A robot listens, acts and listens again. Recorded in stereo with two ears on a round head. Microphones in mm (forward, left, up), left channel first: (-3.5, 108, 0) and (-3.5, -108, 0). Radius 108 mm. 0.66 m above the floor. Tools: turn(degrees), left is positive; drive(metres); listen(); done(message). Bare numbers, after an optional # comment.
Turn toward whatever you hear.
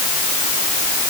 listen()
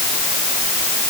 listen()
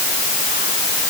done("I can't make out anything to turn to.")